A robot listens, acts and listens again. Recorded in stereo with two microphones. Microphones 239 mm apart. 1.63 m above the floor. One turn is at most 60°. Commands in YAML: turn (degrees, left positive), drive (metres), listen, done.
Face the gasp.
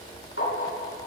listen: true
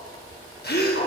turn: 45
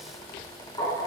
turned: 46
listen: true
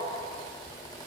done: "I heard a gasp, but can't make it out now. It was about straight ahead or 90° left."